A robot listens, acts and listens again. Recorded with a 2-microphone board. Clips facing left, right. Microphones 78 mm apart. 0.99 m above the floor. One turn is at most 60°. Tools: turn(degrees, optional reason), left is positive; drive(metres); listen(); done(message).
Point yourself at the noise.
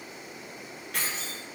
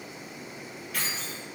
turn(degrees=60, reason="The keys jangling: about 65° left or 115° left.")
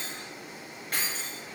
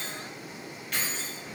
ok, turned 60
turn(degrees=45, reason="So it is at 45° left.")
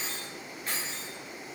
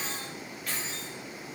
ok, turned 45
turn(degrees=35, reason="The keys jangling is now 35° left.")
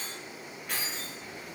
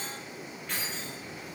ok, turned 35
turn(degrees=10, reason="The keys jangling is now 10° left.")
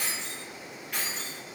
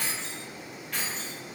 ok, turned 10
turn(degrees=10, reason="The keys jangling is now 10° left.")
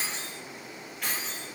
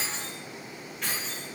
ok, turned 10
done("Facing the keys jangling.")